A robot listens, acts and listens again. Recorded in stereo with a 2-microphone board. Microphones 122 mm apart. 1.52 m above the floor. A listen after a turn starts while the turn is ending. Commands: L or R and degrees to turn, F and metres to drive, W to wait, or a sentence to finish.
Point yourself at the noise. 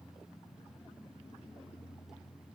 W
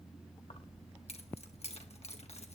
L60
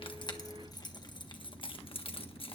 L45
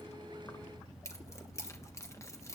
L25
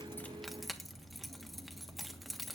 Found it: keys jangling, straight ahead.